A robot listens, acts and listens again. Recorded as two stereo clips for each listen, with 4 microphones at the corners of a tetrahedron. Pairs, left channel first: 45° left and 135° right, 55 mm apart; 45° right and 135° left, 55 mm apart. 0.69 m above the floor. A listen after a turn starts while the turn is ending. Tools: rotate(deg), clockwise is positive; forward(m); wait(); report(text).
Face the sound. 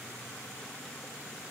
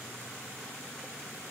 wait()
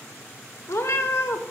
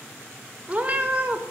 rotate(-75)
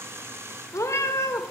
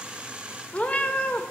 rotate(-15)
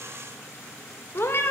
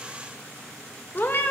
report("Facing the cat meowing.")